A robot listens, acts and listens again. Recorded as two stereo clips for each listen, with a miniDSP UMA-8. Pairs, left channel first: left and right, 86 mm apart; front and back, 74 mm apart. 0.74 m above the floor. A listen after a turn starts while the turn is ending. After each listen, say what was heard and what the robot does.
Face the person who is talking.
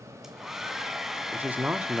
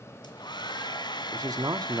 The man speaking: 160° right. Turn 160° right.
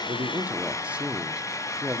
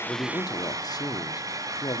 The man speaking is now 15° right. Turn 15° right.
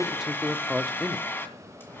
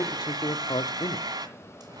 Found it: a man speaking, straight ahead.